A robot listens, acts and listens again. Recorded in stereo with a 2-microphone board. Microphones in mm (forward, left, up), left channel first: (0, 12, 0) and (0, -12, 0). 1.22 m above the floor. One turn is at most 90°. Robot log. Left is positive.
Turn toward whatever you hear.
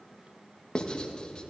note: The writing: about 35° left or 145° left.
cmd yaw +35
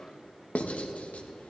note: So it is at 110° left.
cmd yaw +90
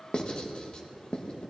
note: The writing is now 45° left.
cmd yaw +45
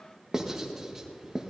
note: The writing is now 15° right.
cmd yaw -15
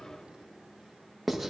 end: Found it: writing, straight ahead, 1 to 2 m away.